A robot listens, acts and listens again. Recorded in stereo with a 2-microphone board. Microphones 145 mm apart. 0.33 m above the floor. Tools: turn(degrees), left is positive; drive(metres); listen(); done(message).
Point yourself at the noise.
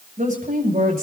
turn(degrees=-90)
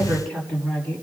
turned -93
turn(degrees=10)
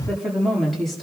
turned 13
done("Found it: a woman speaking, straight ahead.")